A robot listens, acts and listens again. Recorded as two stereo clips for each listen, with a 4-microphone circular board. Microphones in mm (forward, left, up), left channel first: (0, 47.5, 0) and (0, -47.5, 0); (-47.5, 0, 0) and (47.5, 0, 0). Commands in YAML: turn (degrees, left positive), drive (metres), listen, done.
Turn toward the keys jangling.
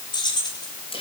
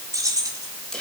turn: 50
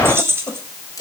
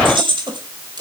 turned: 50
turn: -25
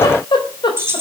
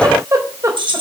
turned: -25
turn: -30
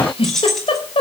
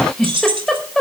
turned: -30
done: "Found it: keys jangling, straight ahead."